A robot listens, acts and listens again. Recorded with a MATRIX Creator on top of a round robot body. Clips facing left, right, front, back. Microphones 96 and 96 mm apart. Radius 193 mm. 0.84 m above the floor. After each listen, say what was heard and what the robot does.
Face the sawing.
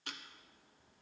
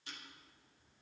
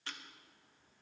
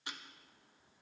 Keep listening.
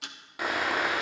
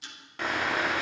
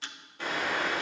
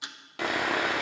The sawing: 170° left. Turn 170° left.
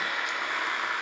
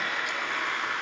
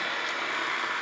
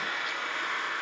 Found it: sawing, straight ahead.